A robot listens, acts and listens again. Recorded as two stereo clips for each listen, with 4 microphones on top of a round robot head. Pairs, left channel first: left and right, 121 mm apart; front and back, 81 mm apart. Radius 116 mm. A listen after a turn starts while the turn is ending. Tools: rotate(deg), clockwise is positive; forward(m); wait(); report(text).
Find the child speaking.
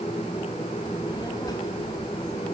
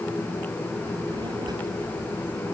rotate(-150)
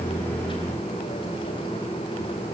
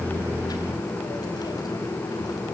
wait()
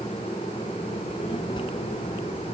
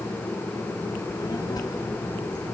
rotate(-35)
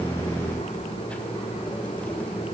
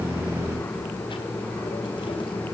rotate(-10)
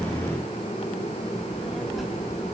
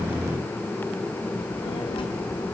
report("Found it: a child speaking, straight ahead.")